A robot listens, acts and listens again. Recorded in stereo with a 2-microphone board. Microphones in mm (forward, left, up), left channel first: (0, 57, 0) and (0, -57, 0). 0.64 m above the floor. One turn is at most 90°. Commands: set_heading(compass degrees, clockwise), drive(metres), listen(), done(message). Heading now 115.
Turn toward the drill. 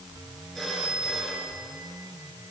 listen()
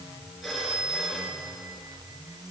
listen()
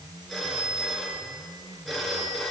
done("I can't make out a drill to turn to.")